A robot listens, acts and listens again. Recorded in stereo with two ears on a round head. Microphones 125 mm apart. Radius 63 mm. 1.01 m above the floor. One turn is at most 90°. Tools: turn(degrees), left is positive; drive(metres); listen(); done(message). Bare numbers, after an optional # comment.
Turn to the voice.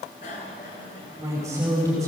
# The woman speaking: about 25° right or 155° right.
turn(-25)
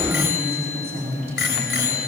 # So it is at 130° right.
turn(-90)
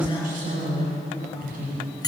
# The woman speaking is now 65° right.
turn(-65)
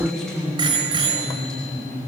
done("Facing the woman speaking, over 4 m away.")